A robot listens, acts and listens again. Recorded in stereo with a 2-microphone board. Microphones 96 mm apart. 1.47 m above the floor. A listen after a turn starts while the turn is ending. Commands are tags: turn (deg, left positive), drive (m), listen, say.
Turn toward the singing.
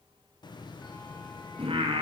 <turn deg="-75"/>
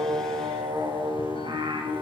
<turn deg="-60"/>
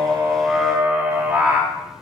<turn deg="-15"/>
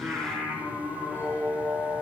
<turn deg="-10"/>
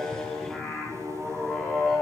<say>Facing the singing.</say>